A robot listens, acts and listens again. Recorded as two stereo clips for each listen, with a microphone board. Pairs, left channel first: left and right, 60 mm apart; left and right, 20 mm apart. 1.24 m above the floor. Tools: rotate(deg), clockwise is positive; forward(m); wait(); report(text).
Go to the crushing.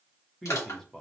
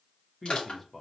rotate(-60)
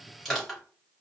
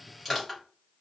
forward(1.0)
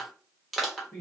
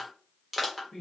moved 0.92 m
forward(1.0)
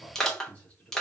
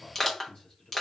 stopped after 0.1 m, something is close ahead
rotate(-10)
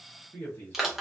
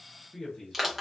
report("I am next to the crushing.")